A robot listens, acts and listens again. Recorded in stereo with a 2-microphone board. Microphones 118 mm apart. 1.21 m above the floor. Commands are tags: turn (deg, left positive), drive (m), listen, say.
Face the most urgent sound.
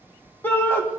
<turn deg="20"/>
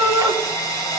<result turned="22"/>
<say>Facing the shout.</say>